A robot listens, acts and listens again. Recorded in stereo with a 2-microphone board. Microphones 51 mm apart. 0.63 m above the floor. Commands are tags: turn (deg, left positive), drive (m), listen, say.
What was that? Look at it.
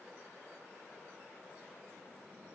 <listen/>
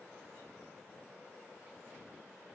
<listen/>
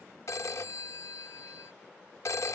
<turn deg="70"/>
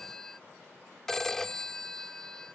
<turn deg="10"/>
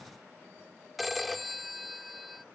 <say>Facing the phone ringing.</say>